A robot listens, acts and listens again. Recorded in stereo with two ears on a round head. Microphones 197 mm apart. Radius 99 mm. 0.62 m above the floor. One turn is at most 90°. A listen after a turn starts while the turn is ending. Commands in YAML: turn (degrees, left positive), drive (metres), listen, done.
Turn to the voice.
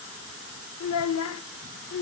turn: 90
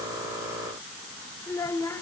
turn: 15
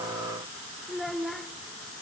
done: "Found it: a child speaking, straight ahead."